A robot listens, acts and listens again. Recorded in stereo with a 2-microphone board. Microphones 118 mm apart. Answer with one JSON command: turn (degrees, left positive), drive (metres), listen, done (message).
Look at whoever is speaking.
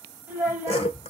{"turn": -30}
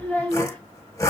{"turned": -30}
{"turn": 15}
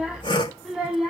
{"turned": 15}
{"done": "Found it: a child speaking, straight ahead."}